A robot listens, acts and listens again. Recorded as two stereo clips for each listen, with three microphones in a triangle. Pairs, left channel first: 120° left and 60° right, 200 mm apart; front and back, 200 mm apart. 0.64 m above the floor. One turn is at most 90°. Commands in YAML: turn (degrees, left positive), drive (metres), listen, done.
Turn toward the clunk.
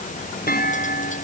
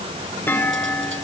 turn: 80
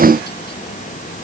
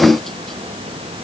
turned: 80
done: "Facing where the clunk came from. I can't hear it now."